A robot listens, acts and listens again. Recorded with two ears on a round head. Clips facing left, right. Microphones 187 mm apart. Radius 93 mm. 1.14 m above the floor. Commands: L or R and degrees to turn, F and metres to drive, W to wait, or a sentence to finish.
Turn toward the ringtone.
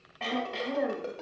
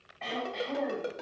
R15
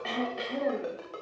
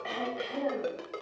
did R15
R145
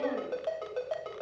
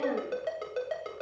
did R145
R25
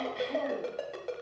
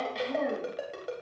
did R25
Facing the ringtone, 2 to 4 m away.